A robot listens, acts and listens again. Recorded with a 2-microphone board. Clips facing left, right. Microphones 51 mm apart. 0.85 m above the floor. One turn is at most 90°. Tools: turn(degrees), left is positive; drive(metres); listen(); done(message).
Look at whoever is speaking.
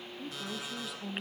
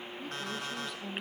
turn(degrees=30)
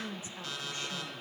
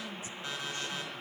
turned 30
turn(degrees=90)
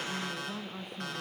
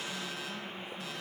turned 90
turn(degrees=65)
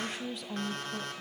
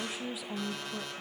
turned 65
done("Found it: a woman speaking, straight ahead, under 1 m away.")